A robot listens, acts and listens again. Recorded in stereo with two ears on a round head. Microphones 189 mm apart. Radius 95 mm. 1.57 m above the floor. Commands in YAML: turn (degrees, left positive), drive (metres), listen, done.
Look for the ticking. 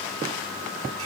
listen: true
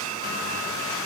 listen: true
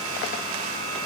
done: "I can't make out ticking to turn to."